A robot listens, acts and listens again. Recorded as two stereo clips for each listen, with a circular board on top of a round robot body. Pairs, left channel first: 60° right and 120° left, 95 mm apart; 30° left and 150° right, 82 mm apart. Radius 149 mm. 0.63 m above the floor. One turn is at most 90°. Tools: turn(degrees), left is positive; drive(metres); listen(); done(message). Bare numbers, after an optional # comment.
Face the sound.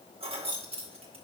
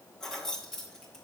# The keys jangling: 115° left.
turn(90)
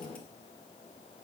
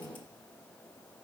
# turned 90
# Nothing new. It was at 25° left.
turn(25)
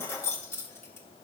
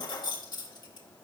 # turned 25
done("Found it: keys jangling, straight ahead.")